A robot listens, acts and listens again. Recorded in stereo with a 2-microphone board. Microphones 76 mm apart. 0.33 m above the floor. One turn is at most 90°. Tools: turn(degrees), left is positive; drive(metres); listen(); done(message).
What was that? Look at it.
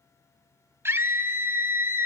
turn(degrees=-30)
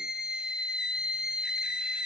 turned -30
turn(degrees=-10)
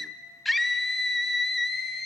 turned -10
done("Facing the scream, 1 to 2 m away.")